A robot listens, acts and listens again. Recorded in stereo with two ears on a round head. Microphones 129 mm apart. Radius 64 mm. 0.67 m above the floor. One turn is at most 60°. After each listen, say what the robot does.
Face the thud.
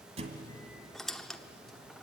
Turn 40° right.
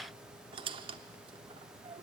Keep listening.
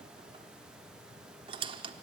I heard a thud, but can't make it out now. It was about straight ahead or 100° right.